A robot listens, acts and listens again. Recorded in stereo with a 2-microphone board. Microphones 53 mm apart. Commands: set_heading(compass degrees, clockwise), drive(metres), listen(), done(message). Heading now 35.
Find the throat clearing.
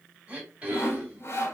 set_heading(55)
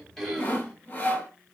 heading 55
done("Facing the throat clearing, 1 to 2 m away.")